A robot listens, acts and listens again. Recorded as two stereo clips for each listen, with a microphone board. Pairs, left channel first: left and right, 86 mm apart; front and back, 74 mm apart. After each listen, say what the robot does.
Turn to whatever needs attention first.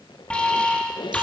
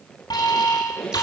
Turn 15° left.
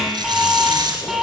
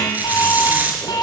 Facing the alarm, over 4 m away.